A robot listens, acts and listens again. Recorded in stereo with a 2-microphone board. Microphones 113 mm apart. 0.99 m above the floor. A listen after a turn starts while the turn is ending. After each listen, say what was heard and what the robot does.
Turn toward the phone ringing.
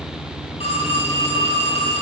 The phone ringing: about 65° left or 115° left. Turn 65° left.
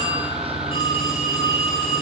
So it is at 50° left. Turn 50° left.
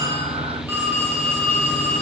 The phone ringing is now 20° right. Turn 20° right.
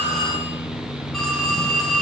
Found it: a phone ringing, straight ahead.